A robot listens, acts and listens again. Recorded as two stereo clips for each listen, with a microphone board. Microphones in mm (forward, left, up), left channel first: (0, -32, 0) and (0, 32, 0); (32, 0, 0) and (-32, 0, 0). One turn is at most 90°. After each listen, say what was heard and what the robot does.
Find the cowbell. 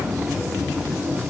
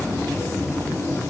Keep listening.
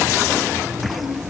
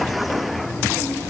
Keep listening.
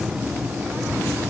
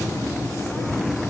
I can't make out a cowbell to turn to.